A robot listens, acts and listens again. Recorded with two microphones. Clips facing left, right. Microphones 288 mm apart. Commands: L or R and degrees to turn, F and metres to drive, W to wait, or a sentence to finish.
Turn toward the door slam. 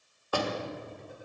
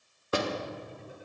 R25
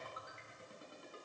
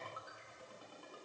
W
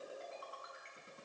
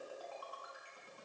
I heard a door slam, but can't make it out now. It was about straight ahead or 130° right.